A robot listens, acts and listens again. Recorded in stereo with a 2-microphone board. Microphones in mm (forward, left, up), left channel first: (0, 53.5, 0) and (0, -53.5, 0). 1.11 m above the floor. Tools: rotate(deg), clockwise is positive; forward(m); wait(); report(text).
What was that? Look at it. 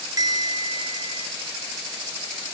rotate(35)
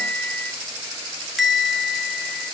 report("Facing the bell.")